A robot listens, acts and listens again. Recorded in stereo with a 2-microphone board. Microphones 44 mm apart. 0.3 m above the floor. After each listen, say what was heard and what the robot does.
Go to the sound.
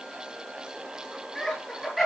Turn 30° left.
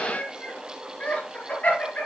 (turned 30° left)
So it is at 140° left. Turn 140° left.
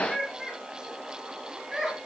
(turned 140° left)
The laughter is now 15° right. Turn 15° right.
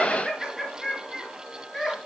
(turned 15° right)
Drive 1.0 m forward.
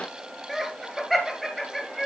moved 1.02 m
The laughter is now 10° right. Turn 10° right.
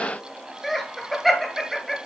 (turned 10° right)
Drive 1.0 m forward.
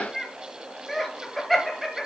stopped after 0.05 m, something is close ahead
I am next to the laughter.